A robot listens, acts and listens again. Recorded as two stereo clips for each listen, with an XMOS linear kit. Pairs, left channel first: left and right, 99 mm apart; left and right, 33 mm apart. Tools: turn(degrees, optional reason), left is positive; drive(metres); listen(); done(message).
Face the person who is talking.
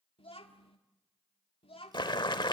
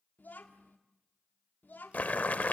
turn(degrees=70, reason="The child speaking: about 70° left or 110° left.")
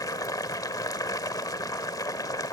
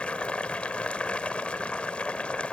listen()
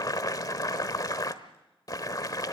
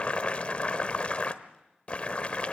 listen()
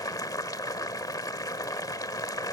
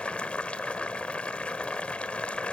done("I heard a child speaking, but can't make it out now. It was about straight ahead or 40° left.")